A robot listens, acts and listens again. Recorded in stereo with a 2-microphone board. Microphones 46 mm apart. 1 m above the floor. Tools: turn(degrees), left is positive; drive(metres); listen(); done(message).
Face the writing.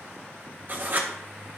turn(degrees=-45)
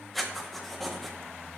done("Facing the writing.")